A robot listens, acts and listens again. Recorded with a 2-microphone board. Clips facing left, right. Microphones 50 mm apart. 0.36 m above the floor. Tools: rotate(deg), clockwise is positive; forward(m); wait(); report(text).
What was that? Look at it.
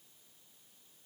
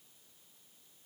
wait()
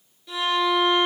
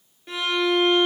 rotate(50)
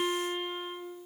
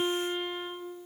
rotate(80)
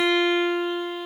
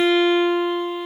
rotate(15)
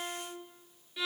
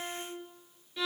report("Facing the violin, 1 to 2 m away.")